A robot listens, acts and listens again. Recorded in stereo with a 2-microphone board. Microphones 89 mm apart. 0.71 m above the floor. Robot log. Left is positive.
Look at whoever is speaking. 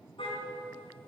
cmd idle
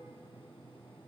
cmd idle
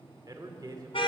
note: The man speaking: about 45° right or 135° right.
cmd yaw -45
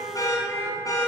cmd idle
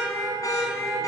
cmd idle
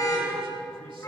end: I heard a man speaking, but can't make it out now. It was about straight ahead or 90° right.